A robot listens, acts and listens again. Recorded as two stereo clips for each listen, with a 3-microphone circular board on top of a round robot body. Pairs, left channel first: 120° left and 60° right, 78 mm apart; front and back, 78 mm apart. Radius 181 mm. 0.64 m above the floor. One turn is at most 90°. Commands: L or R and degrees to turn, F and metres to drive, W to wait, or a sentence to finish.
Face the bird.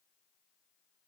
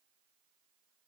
W
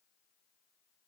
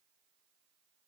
W
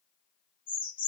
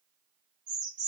L90
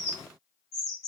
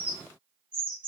L65
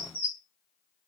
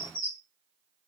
L10
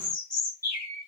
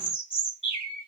Facing the bird, 1 to 2 m away.